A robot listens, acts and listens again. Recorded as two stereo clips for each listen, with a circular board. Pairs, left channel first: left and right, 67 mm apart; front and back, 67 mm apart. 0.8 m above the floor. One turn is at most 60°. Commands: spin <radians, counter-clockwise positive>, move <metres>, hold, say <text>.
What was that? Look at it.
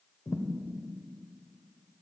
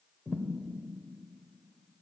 spin 0.96
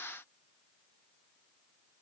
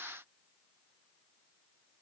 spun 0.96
say I heard a thud from this way, but can't make it out now.